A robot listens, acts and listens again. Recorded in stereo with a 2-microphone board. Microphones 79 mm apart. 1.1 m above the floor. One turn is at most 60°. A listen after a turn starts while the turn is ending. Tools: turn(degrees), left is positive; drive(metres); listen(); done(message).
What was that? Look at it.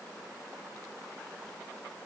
listen()
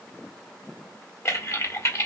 turn(degrees=40)
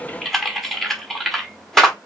done("Facing the typing on a keyboard.")